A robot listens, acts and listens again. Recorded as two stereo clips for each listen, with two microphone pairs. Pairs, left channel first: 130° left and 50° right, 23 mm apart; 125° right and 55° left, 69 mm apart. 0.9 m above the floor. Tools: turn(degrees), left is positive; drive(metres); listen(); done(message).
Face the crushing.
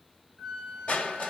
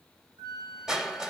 turn(degrees=135)
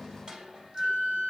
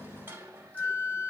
done("Found it: crushing, straight ahead.")